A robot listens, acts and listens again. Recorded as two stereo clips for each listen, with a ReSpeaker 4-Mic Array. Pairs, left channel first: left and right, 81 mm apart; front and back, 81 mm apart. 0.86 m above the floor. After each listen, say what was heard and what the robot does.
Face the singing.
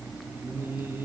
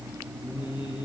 The singing: 25° right. Turn 25° right.
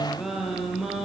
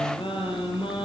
Facing the singing, over 4 m away.